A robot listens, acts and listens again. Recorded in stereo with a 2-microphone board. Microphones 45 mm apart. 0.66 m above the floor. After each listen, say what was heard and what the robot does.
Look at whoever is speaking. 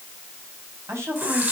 Turn 90° right.
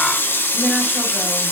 Keep listening.
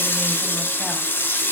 Keep listening.
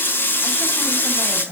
The woman speaking is now 10° left. Turn 10° left.
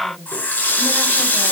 Found it: a woman speaking, straight ahead.